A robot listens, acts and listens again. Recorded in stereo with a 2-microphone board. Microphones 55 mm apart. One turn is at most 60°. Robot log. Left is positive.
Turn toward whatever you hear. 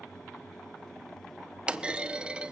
note: The clunk: about 20° right or 160° right.
cmd yaw -20
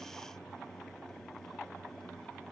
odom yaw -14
cmd idle
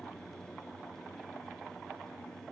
end: I heard a clunk, but can't make it out now. It was about 5° right or 145° right.